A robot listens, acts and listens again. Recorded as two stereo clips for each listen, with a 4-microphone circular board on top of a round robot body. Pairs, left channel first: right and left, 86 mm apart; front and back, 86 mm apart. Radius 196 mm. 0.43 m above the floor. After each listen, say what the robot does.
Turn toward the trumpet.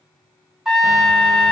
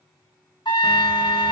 Facing the trumpet.